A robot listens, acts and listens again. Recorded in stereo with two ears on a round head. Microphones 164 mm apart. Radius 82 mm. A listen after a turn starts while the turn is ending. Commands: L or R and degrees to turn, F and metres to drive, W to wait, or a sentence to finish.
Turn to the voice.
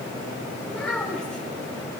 L30
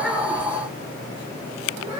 R25
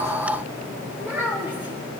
R10
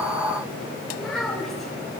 Facing the child speaking.